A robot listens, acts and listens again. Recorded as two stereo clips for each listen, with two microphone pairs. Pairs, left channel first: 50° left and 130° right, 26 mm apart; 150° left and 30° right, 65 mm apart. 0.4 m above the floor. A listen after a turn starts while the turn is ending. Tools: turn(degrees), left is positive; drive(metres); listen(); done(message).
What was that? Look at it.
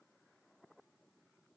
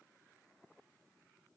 listen()
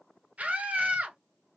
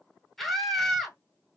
turn(degrees=-120)
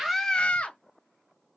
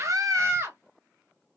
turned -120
turn(degrees=20)
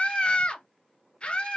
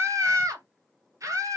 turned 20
done("Found it: a scream, straight ahead.")